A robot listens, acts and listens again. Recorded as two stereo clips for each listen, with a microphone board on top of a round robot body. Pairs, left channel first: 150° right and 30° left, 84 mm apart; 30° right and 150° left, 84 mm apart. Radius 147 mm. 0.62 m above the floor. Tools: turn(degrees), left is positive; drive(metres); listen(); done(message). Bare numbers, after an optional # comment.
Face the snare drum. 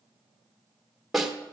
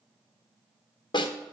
# The snare drum: 60° right.
turn(-60)
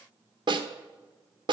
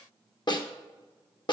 done("Found it: a snare drum, straight ahead.")